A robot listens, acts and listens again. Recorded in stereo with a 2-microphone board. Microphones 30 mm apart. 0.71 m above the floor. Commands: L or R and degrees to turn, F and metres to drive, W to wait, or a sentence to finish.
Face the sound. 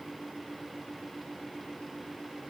W
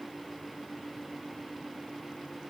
W
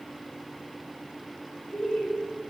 L35
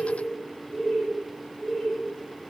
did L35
L40
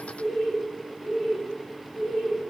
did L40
L20
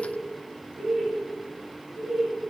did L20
Found it: laughter, straight ahead, 1 to 2 m away.